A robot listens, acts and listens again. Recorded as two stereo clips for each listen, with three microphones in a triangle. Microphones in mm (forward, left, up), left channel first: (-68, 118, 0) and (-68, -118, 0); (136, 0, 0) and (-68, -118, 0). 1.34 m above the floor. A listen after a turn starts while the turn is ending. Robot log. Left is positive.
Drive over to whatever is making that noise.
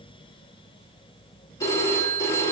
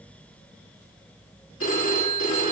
note: The phone ringing: 15° left.
cmd yaw +15
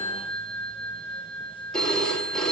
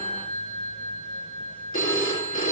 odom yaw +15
cmd fwd 1.0
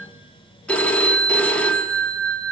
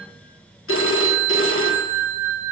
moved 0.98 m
cmd fwd 1.0
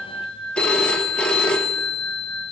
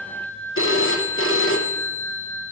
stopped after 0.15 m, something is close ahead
end: Arrived at the phone ringing, straight ahead.